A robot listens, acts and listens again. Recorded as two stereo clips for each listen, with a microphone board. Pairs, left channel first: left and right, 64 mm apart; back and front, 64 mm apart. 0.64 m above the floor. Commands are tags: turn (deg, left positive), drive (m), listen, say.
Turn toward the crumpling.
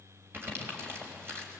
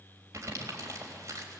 <turn deg="-40"/>
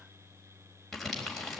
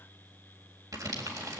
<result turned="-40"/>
<say>Facing the crumpling, 2 to 4 m away.</say>